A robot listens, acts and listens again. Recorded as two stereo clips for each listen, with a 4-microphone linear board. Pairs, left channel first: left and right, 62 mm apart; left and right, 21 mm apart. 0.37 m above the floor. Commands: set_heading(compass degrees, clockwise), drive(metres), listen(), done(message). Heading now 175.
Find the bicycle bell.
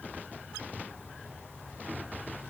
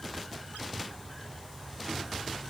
listen()
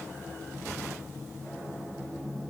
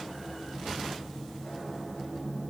listen()
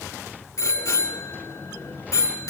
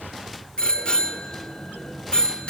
set_heading(115)
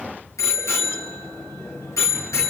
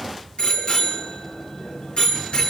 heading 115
set_heading(55)
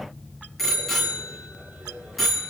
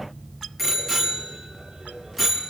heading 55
done("Found it: a bicycle bell, straight ahead.")